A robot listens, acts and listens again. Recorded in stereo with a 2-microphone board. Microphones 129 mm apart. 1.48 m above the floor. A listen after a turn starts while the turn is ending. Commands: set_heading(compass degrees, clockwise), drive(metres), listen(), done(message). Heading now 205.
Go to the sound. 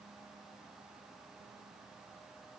listen()
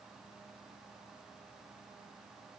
listen()
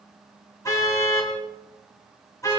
set_heading(180)
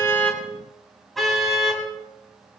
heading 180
drive(1.0)
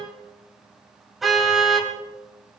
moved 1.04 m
drive(1.0)
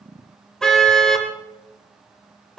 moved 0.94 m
drive(1.0)
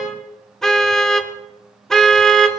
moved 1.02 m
drive(1.0)
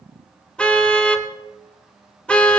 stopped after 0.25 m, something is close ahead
set_heading(170)
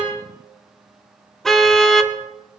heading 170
done("Arrived at the car horn, straight ahead.")